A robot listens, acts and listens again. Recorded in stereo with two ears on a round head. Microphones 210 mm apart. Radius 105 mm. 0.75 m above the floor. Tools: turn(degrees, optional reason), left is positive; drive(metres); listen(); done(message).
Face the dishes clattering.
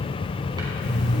listen()
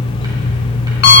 listen()
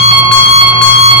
done("I can't make out dishes clattering to turn to.")